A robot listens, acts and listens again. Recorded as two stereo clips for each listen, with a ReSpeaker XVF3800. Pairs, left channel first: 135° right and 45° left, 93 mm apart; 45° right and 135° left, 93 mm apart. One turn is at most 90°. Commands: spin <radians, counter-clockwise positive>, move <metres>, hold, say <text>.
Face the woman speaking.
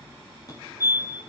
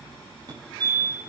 hold
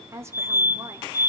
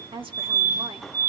spin 1.57
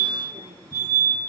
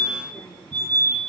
spin 0.26
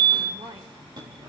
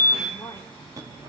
hold
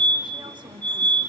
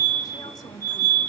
say Facing where the woman speaking came from. I can't hear it now.